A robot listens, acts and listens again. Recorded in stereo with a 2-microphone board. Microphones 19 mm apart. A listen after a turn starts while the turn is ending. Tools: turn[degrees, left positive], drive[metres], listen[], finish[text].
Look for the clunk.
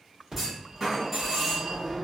Thought: The clunk: about 20° right or 160° right.
Action: turn[-20]
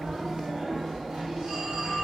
Action: listen[]
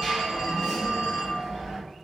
Action: finish[I heard a clunk, but can't make it out now. It was about straight ahead or 140° right.]